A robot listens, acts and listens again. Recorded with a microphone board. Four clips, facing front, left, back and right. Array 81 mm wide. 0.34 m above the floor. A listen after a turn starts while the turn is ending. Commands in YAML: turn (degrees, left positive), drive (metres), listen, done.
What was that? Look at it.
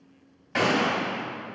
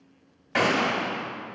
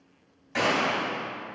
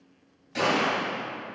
turn: 70
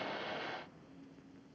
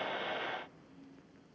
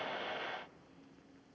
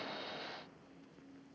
done: "Facing where the gunshot came from. I can't hear it now."